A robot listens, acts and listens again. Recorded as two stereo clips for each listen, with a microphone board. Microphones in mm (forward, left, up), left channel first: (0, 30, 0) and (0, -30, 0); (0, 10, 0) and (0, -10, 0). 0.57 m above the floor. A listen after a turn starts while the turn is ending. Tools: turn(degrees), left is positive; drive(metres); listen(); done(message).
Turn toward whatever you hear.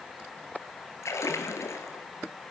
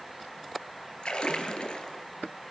turn(degrees=60)
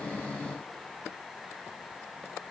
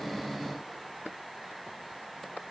listen()
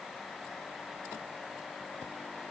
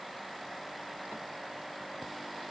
done("I heard a splash, but can't make it out now. It was about straight ahead or 60° left.")